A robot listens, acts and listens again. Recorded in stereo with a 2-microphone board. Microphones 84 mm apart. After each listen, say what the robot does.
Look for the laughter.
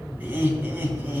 Turn 20° right.
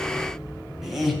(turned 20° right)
Turn 30° left.
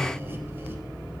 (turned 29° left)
Keep listening.
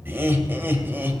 Turn 25° right.
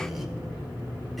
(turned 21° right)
Keep listening.
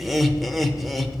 Facing the laughter.